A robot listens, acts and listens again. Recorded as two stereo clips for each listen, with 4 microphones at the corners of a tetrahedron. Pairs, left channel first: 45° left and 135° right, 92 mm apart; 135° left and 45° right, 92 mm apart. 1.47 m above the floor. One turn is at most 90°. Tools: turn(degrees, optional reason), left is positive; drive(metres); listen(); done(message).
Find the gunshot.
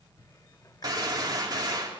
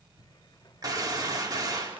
turn(degrees=-90, reason="The gunshot: 90° right.")
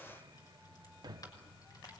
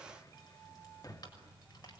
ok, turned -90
done("Facing where the gunshot came from. I can't hear it now.")